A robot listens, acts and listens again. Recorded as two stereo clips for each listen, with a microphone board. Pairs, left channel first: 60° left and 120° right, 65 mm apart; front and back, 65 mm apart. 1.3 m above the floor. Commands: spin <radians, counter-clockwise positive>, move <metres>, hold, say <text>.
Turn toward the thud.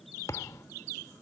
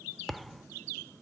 spin 1.57
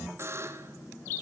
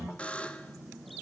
say I heard a thud from this way, but can't make it out now.